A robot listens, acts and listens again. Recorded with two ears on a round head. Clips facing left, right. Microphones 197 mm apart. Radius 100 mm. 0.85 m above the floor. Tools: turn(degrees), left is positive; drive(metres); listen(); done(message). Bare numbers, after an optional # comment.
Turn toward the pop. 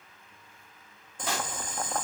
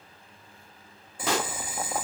# The pop: about 60° right or 120° right.
turn(-60)
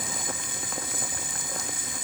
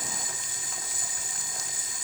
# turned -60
listen()
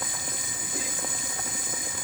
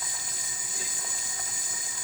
done("I heard a pop, but can't make it out now. It was about straight ahead or 60° right.")